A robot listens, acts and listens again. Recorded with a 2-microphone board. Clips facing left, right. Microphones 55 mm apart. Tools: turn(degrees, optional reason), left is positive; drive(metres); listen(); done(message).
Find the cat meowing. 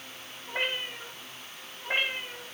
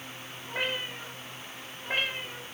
turn(degrees=30)
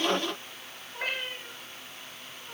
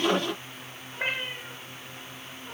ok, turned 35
turn(degrees=-25, reason="So it is at 25° right.")
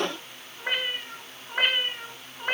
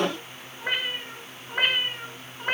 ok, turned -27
done("Facing the cat meowing, 1 to 2 m away.")